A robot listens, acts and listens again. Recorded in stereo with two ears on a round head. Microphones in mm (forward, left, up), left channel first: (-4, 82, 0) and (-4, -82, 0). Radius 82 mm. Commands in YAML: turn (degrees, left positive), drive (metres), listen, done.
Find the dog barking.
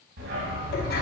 turn: -70
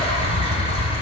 turn: -20
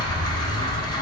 done: "Found it: a dog barking, straight ahead, 1 to 2 m away."